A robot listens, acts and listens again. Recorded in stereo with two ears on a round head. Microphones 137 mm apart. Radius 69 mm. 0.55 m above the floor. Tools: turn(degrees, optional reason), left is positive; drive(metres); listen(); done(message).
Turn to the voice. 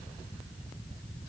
listen()
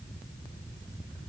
listen()
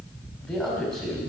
turn(degrees=30)
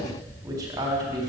turn(degrees=-25, reason="So it is at 25° right.")
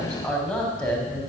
done("Found it: a man speaking, straight ahead.")